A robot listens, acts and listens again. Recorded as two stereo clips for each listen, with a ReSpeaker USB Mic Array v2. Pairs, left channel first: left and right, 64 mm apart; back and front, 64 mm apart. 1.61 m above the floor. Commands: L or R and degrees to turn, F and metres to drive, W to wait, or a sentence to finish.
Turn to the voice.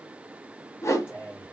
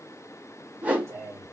L35
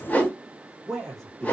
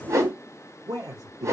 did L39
Found it: a man speaking, straight ahead.